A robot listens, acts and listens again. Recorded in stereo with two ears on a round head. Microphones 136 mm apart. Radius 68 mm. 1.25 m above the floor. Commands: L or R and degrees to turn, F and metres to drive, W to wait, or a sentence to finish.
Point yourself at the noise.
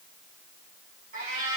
R55
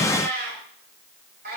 R70
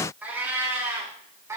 R20
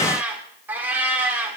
R10
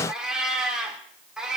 Facing the cat meowing, 1 to 2 m away.